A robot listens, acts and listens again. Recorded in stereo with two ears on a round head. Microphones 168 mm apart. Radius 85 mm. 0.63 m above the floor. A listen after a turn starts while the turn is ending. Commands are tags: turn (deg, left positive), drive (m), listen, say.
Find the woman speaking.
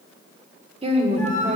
<turn deg="-40"/>
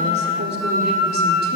<listen/>
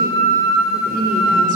<listen/>
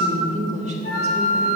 <turn deg="-35"/>
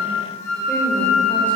<listen/>
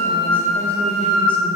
<listen/>
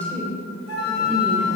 <turn deg="10"/>
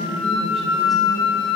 <listen/>
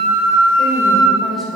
<listen/>
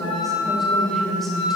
<say>Found it: a woman speaking, straight ahead, 2 to 4 m away.</say>